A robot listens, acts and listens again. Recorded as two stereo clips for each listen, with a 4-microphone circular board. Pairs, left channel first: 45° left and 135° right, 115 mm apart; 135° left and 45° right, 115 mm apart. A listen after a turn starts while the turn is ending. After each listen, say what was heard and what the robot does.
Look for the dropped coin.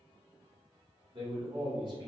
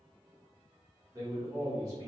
Keep listening.
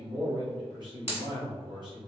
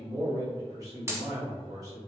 The dropped coin: 20° left. Turn 20° left.
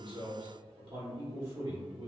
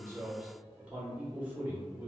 I heard a dropped coin from this way, but can't make it out now.